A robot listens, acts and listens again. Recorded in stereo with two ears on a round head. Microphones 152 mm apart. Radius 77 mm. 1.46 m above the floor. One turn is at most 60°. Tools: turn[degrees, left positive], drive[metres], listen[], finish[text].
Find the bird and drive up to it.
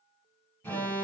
Action: listen[]
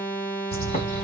Thought: The bird: about 35° left or 145° left.
Action: turn[35]
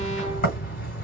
Thought: So it is at 95° left.
Action: turn[60]
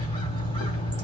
Thought: The bird is now 35° left.
Action: turn[35]
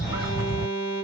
Action: drive[1.0]
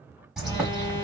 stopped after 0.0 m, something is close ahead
Action: finish[Blocked. The bird is further on, straight ahead.]